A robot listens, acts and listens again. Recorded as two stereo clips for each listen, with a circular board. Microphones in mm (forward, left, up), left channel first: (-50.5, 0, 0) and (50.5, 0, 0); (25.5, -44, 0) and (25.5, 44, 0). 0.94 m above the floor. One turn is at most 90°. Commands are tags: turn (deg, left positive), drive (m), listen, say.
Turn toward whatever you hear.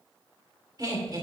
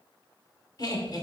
<turn deg="-45"/>
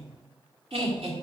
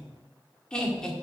<turn deg="-10"/>
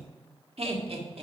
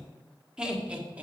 <turn deg="15"/>
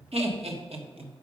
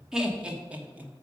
<turn deg="20"/>
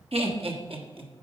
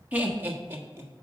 <turn deg="30"/>
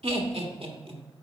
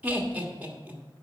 <turn deg="15"/>
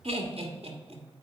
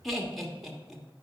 <say>Facing the laughter, 1 to 2 m away.</say>